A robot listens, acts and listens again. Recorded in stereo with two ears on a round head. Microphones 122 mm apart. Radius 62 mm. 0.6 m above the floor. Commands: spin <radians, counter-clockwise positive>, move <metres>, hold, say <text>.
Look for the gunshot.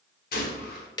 spin 1.31
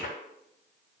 hold
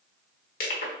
say I heard a gunshot, but can't make it out now. It was about straight ahead or 30° left.